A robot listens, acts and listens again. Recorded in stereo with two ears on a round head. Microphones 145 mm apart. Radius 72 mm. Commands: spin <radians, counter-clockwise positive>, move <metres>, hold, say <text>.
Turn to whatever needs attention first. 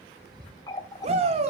spin -0.79
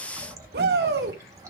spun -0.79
spin -1.57
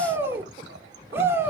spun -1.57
spin -0.26
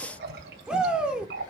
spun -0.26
say Facing the shout, 2 to 4 m away.